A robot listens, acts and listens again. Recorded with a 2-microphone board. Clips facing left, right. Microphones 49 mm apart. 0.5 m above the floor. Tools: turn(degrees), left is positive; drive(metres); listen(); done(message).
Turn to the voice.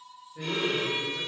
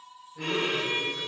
turn(degrees=15)
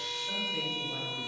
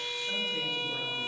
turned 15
listen()
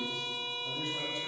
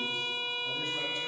listen()
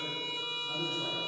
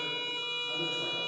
turn(degrees=-10)
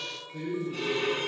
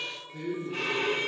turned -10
done("Facing the man speaking.")